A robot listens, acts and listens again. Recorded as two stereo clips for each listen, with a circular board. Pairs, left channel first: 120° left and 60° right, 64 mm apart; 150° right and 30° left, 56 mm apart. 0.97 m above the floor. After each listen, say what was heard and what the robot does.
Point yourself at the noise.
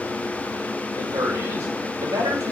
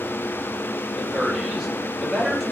The man speaking: 60° right. Turn 60° right.
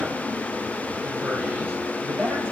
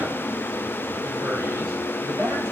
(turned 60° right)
Found it: a man speaking, straight ahead.